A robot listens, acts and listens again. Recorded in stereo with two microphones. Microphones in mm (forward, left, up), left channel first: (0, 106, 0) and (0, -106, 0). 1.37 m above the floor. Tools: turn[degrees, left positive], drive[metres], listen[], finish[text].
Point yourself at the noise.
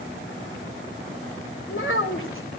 Thought: The child speaking: about 70° left or 110° left.
Action: turn[70]
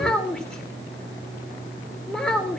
Action: finish[Found it: a child speaking, straight ahead, 2 to 4 m away.]